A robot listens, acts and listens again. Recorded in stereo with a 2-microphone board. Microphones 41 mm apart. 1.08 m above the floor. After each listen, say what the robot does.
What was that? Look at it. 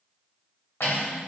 Turn 90° left.
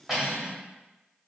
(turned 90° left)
Facing the cutlery clinking, 1 to 2 m away.